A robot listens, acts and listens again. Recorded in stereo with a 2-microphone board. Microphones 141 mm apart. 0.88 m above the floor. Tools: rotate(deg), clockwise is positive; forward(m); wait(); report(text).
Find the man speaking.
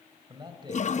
rotate(35)
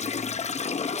wait()
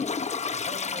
wait()
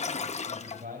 rotate(95)
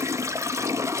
wait()
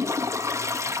wait()
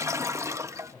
report("Facing the man speaking, over 4 m away.")